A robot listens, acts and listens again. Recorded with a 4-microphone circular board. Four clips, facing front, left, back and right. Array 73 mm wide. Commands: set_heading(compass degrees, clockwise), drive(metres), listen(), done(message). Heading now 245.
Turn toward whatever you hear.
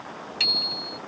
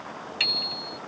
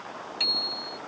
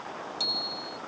set_heading(170)
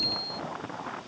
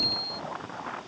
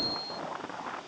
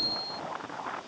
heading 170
set_heading(140)
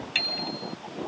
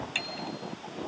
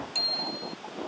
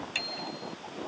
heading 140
done("Facing the bicycle bell.")